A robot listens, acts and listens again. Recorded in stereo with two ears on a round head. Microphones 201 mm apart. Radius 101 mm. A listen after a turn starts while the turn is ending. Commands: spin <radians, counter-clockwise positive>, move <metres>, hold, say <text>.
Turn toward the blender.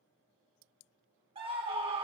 hold
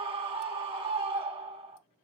hold
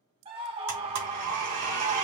spin -1.57
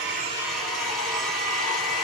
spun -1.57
say Facing the blender.